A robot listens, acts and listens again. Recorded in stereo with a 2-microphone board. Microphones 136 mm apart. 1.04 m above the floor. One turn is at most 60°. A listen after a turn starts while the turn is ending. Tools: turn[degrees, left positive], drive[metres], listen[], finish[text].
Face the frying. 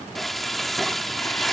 Action: turn[30]
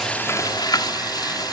Thought: So it is at 150° left.
Action: turn[60]
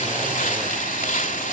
Thought: The frying is now 80° left.
Action: turn[60]
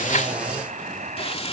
Thought: The frying is now 50° left.
Action: turn[50]
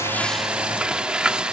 Action: finish[Facing the frying.]